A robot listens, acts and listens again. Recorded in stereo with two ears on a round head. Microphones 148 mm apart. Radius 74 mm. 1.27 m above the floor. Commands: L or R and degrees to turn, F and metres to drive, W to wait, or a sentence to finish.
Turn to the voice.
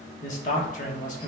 L50
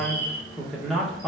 Found it: a man speaking, straight ahead, 1 to 2 m away.